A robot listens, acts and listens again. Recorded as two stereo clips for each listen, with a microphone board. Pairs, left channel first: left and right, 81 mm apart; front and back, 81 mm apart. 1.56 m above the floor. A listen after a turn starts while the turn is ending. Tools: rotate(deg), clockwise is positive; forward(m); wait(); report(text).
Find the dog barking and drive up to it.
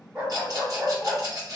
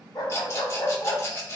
rotate(15)
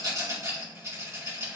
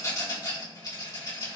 wait()
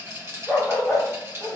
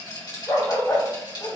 forward(1.0)
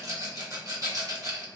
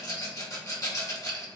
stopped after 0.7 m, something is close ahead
wait()
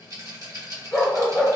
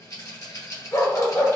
rotate(-15)
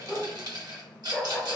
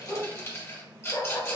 report("I am next to the dog barking.")